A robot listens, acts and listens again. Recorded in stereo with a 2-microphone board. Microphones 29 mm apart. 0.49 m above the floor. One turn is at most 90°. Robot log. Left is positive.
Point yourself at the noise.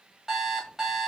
note: The alarm clock: about 15° right or 165° right.
cmd yaw -15
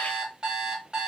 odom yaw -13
note: So it is at 150° right.
cmd yaw -90
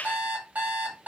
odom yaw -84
note: The alarm clock is now 65° right.
cmd yaw -65
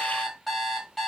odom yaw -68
end: Found it: an alarm clock, straight ahead.